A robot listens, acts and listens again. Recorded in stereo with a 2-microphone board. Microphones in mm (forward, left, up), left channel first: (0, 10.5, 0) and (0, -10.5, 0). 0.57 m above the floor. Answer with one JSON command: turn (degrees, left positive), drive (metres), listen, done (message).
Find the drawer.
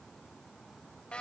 {"listen": true}
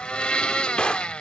{"turn": 60}
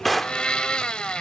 {"done": "Facing the drawer."}